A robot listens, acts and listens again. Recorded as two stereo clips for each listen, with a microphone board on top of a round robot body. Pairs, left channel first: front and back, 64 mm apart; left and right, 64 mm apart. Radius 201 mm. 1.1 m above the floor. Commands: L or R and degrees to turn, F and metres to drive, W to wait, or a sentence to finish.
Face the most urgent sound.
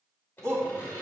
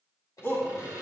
L145
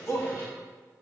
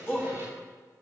L35
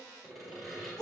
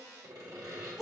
R10
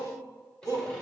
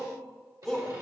Found it: a shout, straight ahead, 2 to 4 m away.